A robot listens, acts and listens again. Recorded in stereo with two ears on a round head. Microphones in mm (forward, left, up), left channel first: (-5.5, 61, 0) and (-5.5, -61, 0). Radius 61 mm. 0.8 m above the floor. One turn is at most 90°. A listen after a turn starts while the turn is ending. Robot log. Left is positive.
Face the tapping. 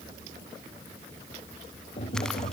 note: The tapping: about 45° left or 135° left.
cmd yaw +45
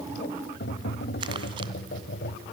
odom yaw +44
note: So it is at 95° left.
cmd yaw +90
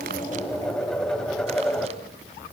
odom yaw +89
end: Facing the tapping, 2 to 4 m away.